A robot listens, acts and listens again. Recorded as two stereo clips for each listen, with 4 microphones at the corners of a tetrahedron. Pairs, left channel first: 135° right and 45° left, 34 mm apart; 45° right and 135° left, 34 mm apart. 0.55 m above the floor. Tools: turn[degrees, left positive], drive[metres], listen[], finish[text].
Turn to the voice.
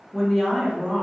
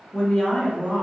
Thought: The woman speaking: 55° right.
Action: turn[-55]
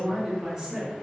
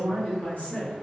Thought: The woman speaking is now 20° right.
Action: turn[-20]
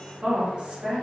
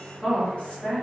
Action: finish[Found it: a woman speaking, straight ahead.]